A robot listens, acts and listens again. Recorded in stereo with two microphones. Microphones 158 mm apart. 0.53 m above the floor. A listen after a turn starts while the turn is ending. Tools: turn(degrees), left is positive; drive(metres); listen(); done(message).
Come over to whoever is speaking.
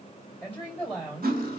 turn(degrees=30)
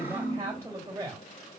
turn(degrees=-20)
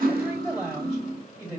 drive(metres=1.0)
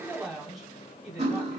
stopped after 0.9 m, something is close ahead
done("I am next to the woman speaking.")